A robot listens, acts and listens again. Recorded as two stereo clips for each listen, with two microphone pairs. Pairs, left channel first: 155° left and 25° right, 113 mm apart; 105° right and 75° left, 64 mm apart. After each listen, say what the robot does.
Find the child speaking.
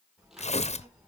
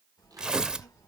Turn 110° right.
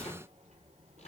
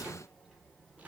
Turn 25° right.
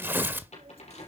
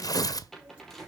Found it: a child speaking, straight ahead, 2 to 4 m away.